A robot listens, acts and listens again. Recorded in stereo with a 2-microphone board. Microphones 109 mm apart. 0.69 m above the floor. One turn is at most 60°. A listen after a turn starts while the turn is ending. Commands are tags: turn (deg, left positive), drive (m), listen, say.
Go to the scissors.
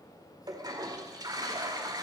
<listen/>
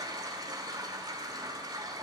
<listen/>
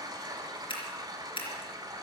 <turn deg="55"/>
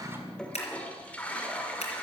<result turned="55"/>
<turn deg="60"/>
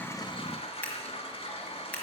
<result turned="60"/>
<turn deg="10"/>
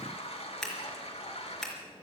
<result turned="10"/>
<drive m="1.0"/>
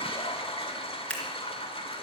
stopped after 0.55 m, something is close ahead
<turn deg="10"/>
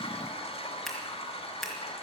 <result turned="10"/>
<say>Something is in my way. I am facing the scissors but have not reached it.</say>